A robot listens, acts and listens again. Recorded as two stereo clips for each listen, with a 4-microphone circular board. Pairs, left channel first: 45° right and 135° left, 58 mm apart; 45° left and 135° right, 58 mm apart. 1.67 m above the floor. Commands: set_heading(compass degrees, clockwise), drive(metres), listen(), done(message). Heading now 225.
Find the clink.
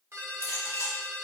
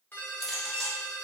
set_heading(275)
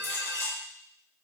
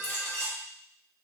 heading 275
done("Found it: a clink, straight ahead, 1 to 2 m away.")